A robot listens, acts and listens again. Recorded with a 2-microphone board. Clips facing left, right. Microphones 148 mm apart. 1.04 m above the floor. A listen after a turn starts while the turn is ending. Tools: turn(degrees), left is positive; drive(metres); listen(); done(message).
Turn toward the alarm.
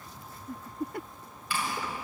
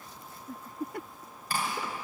listen()
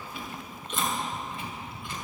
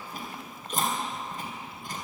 listen()
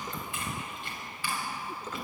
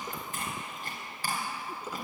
done("I can't make out an alarm to turn to.")